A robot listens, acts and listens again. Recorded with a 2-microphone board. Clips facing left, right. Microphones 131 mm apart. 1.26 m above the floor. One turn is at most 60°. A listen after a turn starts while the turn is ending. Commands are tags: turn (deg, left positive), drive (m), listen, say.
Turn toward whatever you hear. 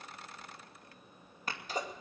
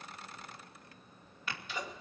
<turn deg="40"/>
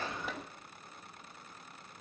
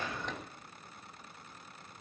<listen/>
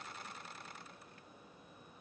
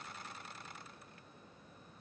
<say>I heard a sneeze, but can't make it out now. It was about straight ahead or 100° left.</say>